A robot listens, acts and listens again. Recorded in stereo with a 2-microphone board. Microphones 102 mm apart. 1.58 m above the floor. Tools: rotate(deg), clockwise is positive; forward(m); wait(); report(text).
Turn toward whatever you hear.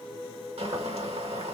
rotate(90)
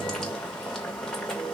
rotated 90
report("Found it: boiling, straight ahead.")